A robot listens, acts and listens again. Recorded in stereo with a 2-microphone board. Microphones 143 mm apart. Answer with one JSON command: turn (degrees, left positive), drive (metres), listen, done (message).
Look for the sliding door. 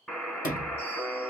{"turn": 90}
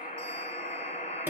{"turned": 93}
{"listen": true}
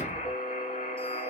{"listen": true}
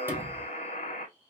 {"turn": -15}
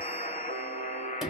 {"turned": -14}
{"done": "Found it: a sliding door, straight ahead."}